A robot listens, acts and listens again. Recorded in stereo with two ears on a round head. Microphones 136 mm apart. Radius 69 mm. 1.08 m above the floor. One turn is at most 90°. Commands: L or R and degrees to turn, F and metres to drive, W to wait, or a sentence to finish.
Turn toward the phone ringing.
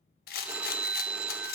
R30
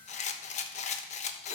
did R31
W
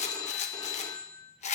L25
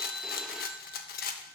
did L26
Found it: a phone ringing, straight ahead.